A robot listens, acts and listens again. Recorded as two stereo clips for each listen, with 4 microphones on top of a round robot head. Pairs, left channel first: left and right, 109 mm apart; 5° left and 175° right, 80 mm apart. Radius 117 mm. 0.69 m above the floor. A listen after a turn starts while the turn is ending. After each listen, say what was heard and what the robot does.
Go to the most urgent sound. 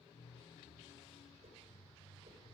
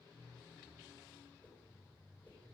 Keep listening.
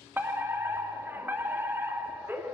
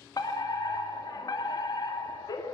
The fire alarm: 20° right. Turn 20° right.
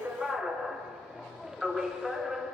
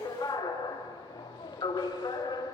Drive 1.0 m forward.
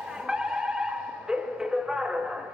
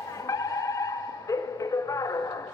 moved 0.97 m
The fire alarm is now 10° right. Turn 10° right.
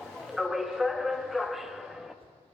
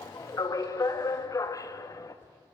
Drive 1.0 m forward.
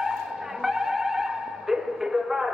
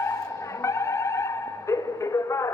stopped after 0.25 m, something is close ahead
I am next to the fire alarm.